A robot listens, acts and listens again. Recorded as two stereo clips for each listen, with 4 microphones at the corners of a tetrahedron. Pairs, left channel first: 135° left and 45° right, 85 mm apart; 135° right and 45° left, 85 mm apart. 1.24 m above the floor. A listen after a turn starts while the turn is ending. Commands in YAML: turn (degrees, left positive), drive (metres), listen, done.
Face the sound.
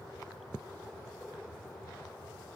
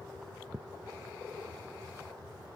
listen: true
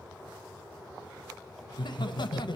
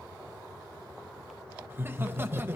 turn: 110
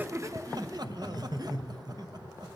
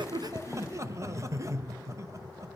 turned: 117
done: "Found it: laughter, straight ahead, under 1 m away."